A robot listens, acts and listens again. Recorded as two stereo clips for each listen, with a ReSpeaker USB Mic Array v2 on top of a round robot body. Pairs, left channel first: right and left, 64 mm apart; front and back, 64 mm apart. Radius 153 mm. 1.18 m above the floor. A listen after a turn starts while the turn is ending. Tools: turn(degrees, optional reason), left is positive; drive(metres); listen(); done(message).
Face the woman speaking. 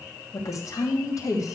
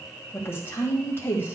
turn(degrees=-55, reason="The woman speaking: 55° right.")
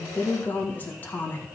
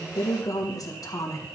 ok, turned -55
turn(degrees=-30, reason="The woman speaking is now 30° right.")
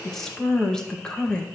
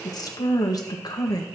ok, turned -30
turn(degrees=-15, reason="The woman speaking is now 15° right.")
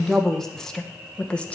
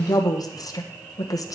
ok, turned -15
turn(degrees=-20, reason="The woman speaking is now 20° right.")
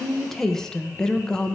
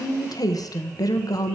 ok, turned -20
turn(degrees=-10, reason="The woman speaking is now 10° right.")
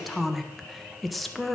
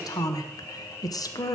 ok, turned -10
done("Facing the woman speaking, 1 to 2 m away.")